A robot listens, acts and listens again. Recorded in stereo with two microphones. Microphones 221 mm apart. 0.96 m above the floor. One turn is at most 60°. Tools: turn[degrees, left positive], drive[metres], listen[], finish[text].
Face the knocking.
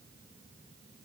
Action: listen[]
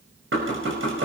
Thought: The knocking: about 65° right or 115° right.
Action: turn[-60]
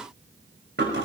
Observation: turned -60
Thought: So it is at 55° right.
Action: turn[-55]
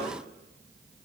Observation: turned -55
Action: listen[]
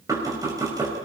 Thought: The knocking is now 15° right.
Action: turn[-15]
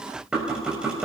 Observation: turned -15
Action: finish[Facing the knocking.]